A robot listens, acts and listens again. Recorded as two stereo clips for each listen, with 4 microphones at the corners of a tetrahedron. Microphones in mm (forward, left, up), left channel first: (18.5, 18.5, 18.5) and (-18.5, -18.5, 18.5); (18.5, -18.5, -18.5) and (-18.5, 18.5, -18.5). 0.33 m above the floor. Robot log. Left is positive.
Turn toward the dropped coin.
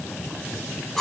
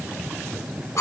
cmd idle
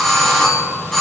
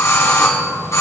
cmd idle
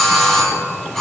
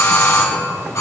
end: I can't make out a dropped coin to turn to.